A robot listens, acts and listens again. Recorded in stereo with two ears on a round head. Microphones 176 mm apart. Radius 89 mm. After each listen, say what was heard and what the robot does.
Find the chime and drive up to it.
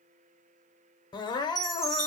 Turn 30° left.
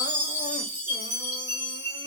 So it is at 30° right. Turn 30° right.
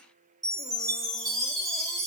The chime is now 20° right. Turn 20° right.
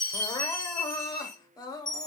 Drive 1.0 m forward.
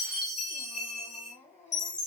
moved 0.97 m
Drive 1.0 m forward.
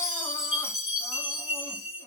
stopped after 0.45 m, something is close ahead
I am next to the chime.